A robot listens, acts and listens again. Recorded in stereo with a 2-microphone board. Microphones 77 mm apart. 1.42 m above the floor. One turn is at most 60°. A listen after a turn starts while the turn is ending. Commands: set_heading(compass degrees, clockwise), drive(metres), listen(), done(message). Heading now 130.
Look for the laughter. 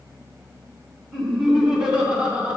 set_heading(150)
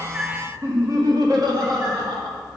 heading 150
set_heading(210)
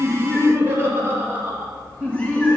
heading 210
set_heading(230)
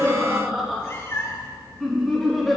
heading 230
done("Found it: laughter, straight ahead.")